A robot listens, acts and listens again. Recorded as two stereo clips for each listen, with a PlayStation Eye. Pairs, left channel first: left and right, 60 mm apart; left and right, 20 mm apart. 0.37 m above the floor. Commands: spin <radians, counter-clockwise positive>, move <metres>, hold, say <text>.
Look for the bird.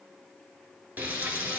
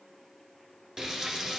hold
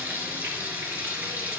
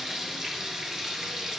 hold
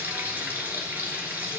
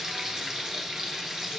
say I can't make out a bird, only frying.